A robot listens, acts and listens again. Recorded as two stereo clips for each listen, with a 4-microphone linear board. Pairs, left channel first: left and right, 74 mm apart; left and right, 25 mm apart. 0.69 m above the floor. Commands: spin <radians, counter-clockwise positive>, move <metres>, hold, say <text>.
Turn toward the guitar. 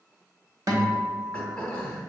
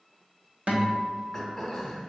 spin -0.87
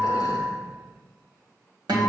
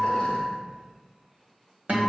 spin -1.31
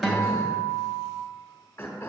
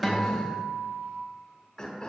say Facing the guitar, 1 to 2 m away.